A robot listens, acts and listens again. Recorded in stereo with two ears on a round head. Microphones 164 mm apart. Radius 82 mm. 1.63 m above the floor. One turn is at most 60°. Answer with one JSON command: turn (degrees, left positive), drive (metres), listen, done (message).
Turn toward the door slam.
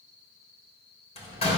{"turn": 35}
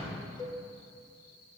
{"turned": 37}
{"listen": true}
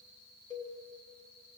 {"done": "I heard a door slam, but can't make it out now. It was about straight ahead or 110° left."}